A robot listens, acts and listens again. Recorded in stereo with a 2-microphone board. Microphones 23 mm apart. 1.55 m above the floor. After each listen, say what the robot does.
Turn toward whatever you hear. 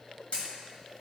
Turn 55° left.
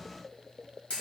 Turn 65° left.
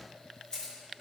Turn 40° left.
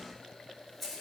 Turn 10° left.
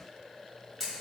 Found it: a camera shutter, straight ahead, 2 to 4 m away.